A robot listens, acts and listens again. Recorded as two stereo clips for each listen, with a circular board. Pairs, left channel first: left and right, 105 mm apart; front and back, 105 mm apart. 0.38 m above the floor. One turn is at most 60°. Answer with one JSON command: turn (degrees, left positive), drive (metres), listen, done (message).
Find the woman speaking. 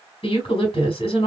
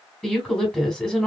{"turn": 60}
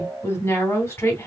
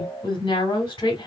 {"turn": 30}
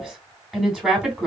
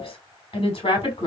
{"done": "Found it: a woman speaking, straight ahead."}